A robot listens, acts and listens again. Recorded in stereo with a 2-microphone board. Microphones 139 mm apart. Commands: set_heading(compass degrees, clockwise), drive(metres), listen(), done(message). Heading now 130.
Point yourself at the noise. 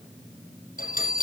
set_heading(40)
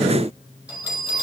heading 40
set_heading(50)
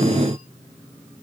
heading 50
listen()
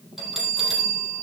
done("Facing the bell.")